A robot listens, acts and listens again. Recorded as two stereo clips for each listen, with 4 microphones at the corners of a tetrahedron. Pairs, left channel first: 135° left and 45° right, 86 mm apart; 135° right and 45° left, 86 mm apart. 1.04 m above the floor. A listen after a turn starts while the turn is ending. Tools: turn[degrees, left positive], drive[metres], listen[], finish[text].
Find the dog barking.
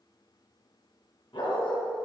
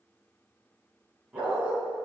Thought: The dog barking: 125° left.
Action: turn[125]
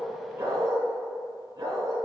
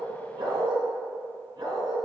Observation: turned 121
Action: finish[Found it: a dog barking, straight ahead, over 4 m away.]